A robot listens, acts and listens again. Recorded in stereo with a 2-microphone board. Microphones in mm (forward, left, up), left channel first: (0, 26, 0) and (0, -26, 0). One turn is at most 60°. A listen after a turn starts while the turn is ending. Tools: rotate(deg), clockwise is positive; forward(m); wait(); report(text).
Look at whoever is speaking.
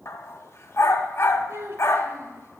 rotate(60)
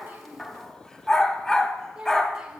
rotate(20)
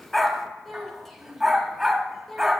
report("Found it: a child speaking, straight ahead, 1 to 2 m away.")